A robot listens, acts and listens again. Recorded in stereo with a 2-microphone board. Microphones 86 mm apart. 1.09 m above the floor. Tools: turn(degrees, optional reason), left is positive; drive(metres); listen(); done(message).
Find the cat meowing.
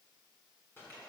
listen()
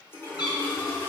turn(degrees=75, reason="The cat meowing: about 75° left or 105° left.")
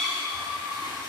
done("Facing the cat meowing.")